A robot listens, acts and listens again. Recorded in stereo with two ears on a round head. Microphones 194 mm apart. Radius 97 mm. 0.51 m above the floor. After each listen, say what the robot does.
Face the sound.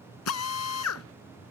Turn 90° left.
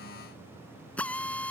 Found it: a drill, straight ahead.